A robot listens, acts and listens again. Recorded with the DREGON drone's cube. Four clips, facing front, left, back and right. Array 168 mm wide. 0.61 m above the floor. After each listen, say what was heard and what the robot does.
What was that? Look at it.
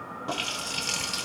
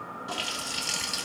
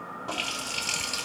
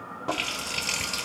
The running tap: 85° right. Turn 85° right.
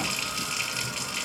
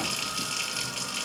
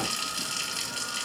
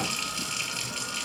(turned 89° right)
Facing the running tap.